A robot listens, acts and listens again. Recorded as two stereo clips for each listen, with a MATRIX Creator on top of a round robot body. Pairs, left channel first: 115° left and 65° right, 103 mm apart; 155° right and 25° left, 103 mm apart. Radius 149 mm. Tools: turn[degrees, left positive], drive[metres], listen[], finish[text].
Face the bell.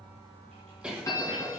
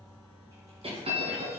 Thought: The bell: 50° left.
Action: turn[50]
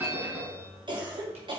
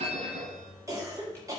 Action: finish[Facing the bell.]